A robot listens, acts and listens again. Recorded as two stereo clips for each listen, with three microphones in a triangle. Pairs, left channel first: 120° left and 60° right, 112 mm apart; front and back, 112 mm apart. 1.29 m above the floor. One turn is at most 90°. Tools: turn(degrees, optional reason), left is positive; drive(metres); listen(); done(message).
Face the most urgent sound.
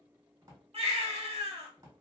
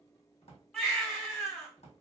turn(degrees=-85, reason="The baby crying: 85° right.")
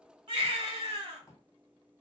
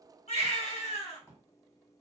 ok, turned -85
turn(degrees=-15, reason="The baby crying is now 15° right.")
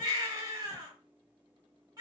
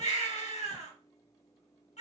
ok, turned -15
done("Facing the baby crying.")